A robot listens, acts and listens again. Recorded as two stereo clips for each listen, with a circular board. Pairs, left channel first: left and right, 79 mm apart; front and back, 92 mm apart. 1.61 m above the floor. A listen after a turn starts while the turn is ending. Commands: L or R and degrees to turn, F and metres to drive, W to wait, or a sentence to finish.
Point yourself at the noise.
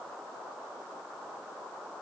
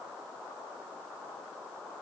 W
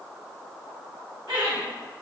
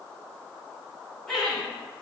R85
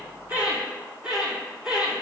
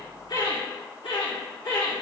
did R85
R15
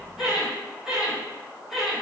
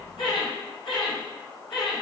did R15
Facing the laughter, 2 to 4 m away.